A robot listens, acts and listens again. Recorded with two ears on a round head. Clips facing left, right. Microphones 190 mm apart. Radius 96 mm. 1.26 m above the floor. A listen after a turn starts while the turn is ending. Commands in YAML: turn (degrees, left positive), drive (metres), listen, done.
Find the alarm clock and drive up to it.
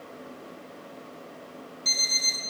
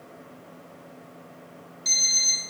turn: -30
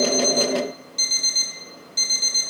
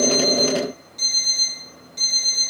turn: 25
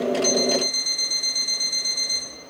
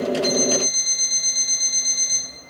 drive: 1.0
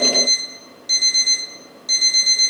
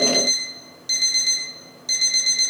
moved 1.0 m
drive: 1.0
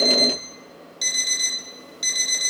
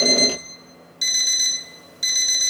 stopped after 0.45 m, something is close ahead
turn: -10
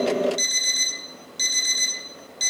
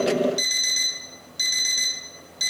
done: "Arrived at the alarm clock, straight ahead."